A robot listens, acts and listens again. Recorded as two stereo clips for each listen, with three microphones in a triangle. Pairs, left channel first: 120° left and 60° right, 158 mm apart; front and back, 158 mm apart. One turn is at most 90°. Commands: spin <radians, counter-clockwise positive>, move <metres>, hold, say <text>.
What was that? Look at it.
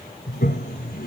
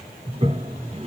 spin 1.57
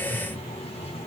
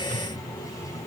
spin 1.13
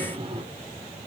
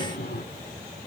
say Facing the toilet flushing, 1 to 2 m away.